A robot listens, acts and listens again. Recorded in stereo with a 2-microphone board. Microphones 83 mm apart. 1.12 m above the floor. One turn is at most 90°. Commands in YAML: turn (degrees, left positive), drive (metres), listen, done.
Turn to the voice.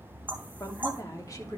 turn: 45
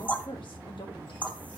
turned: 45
turn: 90
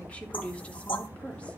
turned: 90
turn: 15
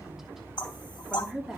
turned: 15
done: "Found it: a woman speaking, straight ahead."